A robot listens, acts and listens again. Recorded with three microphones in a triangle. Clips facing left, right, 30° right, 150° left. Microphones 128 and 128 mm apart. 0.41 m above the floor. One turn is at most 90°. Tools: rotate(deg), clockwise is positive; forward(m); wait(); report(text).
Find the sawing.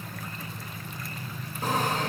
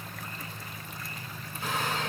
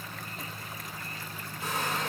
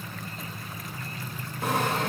rotate(-90)
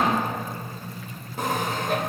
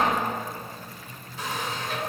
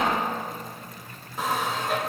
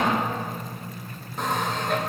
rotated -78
rotate(-55)
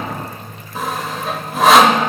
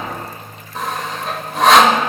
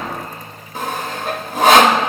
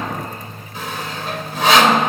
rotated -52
report("Facing the sawing.")